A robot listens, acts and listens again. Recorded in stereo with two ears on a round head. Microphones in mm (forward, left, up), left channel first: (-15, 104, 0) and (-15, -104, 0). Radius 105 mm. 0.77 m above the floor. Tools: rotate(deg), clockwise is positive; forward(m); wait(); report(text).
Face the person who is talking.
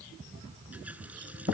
wait()
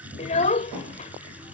rotate(-30)
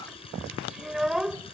report("Facing the child speaking.")